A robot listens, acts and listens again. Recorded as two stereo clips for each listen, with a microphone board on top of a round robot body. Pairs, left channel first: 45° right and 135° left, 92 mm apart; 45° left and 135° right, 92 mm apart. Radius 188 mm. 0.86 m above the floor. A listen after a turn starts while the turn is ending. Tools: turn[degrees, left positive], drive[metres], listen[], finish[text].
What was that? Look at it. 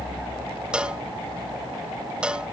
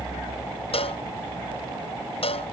Thought: The cowbell: 55° left.
Action: turn[55]
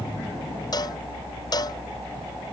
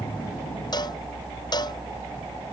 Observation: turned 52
Action: listen[]
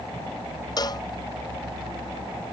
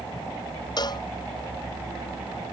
Action: finish[Facing the cowbell.]